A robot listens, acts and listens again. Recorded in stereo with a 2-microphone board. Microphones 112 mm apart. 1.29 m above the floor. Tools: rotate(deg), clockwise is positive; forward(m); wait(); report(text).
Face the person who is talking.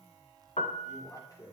rotate(-35)
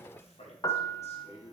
rotate(-105)
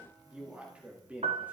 rotate(15)
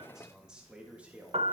rotate(15)
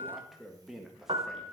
report("Facing the man speaking.")